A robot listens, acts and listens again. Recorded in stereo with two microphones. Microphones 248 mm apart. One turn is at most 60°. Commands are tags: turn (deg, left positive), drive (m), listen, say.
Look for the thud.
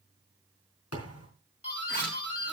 <turn deg="60"/>
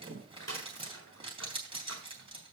<turn deg="30"/>
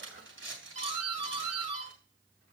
<say>I heard a thud from this way, but can't make it out now.</say>